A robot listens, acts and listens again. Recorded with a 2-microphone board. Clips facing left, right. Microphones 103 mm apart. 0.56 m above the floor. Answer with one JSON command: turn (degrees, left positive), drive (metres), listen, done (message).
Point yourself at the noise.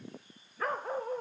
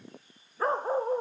{"turn": -30}
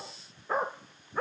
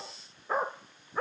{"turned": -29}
{"done": "Facing the dog barking."}